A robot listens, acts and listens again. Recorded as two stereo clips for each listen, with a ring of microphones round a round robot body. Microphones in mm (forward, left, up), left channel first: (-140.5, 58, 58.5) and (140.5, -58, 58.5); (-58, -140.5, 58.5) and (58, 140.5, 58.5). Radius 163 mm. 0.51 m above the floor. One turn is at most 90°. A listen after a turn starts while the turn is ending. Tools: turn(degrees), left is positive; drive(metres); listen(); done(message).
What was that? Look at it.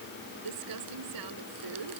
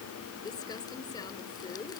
turn(degrees=-35)
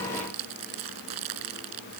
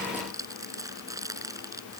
turn(degrees=-10)
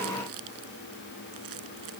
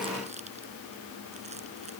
listen()
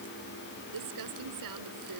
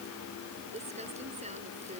done("Found it: crumpling, straight ahead.")